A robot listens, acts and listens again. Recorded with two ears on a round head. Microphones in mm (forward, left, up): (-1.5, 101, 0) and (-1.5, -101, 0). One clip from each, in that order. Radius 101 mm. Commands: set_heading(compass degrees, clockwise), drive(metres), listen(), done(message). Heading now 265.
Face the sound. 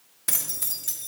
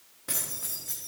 set_heading(195)
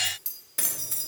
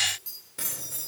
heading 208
set_heading(173)
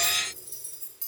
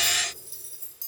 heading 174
done("Facing the keys jangling, 2 to 4 m away.")